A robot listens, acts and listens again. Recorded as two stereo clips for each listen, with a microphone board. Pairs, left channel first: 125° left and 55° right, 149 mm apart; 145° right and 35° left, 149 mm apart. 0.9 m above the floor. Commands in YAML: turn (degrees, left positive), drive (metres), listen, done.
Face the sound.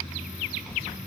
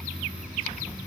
listen: true
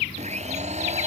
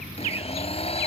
turn: -95
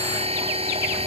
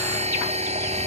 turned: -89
turn: -10
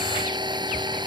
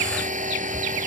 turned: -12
done: "Facing the blender."